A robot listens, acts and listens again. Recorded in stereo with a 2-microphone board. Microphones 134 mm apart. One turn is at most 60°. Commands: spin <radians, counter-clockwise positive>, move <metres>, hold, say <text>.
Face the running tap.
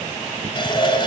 spin 0.61
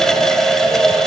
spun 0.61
say Facing the running tap, 1 to 2 m away.